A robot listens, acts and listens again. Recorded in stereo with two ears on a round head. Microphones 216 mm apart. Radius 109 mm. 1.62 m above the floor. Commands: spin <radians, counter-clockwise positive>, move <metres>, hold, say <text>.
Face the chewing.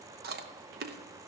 spin -0.79
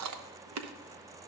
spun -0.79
spin -1.57
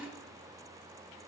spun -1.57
spin -0.17
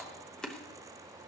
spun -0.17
say Facing the chewing, under 1 m away.